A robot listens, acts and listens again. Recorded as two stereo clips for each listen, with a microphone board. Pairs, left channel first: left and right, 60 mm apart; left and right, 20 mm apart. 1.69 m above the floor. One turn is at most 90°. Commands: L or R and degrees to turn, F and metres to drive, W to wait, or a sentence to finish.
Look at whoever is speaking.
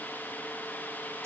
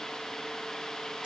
W
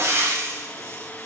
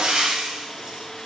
W
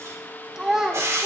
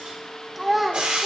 R30
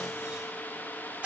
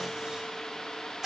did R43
W
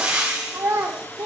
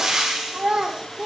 R90
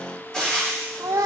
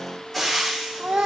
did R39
R85
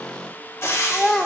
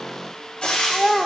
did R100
L15
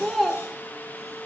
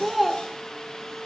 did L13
Found it: a child speaking, straight ahead.